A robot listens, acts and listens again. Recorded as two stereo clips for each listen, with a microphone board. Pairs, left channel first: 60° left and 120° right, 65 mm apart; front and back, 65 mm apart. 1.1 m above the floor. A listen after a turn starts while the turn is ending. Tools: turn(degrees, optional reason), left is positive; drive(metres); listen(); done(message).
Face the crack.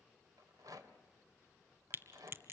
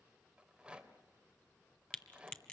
turn(degrees=-75, reason="The crack: 75° right.")
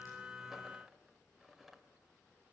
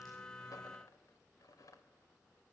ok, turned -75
done("I heard a crack from this way, but can't make it out now.")